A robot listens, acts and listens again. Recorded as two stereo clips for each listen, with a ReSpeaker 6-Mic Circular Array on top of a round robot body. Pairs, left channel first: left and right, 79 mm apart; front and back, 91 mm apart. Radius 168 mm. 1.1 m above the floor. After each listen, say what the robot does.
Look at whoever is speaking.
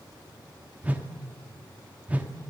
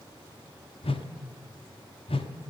Keep listening.
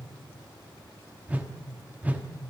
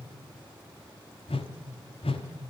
Keep listening.
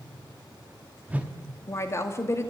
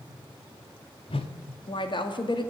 Turn 35° left.
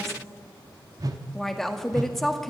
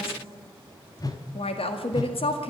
Facing the woman speaking.